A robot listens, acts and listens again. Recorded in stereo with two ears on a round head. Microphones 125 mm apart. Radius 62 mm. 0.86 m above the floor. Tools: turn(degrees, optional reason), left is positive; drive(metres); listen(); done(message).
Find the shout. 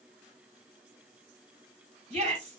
turn(degrees=-50, reason="The shout: about 50° right or 130° right.")
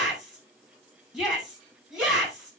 done("Facing the shout.")